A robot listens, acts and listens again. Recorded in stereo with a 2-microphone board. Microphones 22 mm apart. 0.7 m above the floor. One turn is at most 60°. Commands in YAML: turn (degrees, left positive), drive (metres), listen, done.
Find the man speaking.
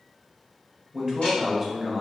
turn: -30
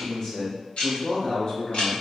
turn: 45
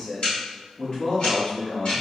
turn: 45
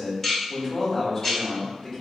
turn: 20
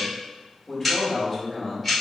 done: "Found it: a man speaking, straight ahead, 2 to 4 m away."